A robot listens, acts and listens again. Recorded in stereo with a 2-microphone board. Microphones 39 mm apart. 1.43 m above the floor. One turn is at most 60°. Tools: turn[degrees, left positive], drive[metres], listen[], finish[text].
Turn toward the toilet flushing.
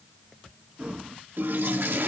Thought: The toilet flushing: about 65° right or 115° right.
Action: turn[-60]
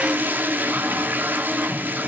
Thought: So it is at 55° right.
Action: turn[-55]
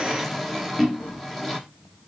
Action: finish[Found it: a toilet flushing, straight ahead.]